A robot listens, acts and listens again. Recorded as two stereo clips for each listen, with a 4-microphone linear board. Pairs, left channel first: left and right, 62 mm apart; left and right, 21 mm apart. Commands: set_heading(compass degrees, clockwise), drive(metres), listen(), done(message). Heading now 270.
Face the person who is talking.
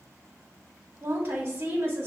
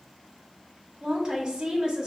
set_heading(300)
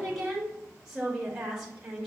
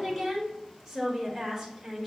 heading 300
done("Found it: a woman speaking, straight ahead.")